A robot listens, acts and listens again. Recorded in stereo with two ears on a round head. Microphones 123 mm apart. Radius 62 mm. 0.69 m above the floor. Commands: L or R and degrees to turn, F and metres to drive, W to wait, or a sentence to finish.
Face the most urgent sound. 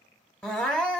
L30
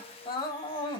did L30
L140
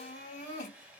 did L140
L50
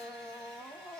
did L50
Found it: crying, straight ahead, 1 to 2 m away.